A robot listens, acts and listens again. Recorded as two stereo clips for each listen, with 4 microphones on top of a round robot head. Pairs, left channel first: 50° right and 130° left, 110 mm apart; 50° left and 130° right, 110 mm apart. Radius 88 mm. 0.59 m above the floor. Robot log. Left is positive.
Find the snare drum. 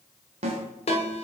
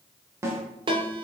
note: The snare drum: 165° left.
cmd yaw +165
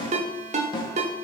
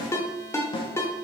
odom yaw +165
end: Facing the snare drum.